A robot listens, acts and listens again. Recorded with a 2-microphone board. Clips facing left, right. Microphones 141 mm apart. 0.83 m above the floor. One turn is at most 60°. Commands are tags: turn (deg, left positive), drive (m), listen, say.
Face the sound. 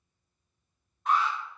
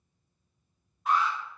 <turn deg="-30"/>
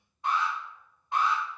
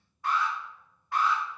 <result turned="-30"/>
<turn deg="25"/>
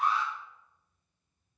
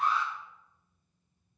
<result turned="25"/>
<say>Facing the alarm, 1 to 2 m away.</say>